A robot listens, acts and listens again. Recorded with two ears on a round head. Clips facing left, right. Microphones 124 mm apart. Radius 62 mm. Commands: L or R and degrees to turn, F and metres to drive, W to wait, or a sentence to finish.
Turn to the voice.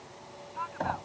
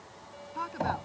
R45
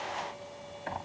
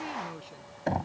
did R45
W
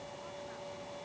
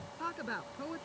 R85
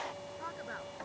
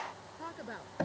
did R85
R25
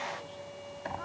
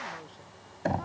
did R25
W
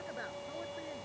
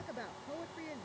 R15
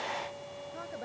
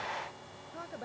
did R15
Found it: a woman speaking, straight ahead.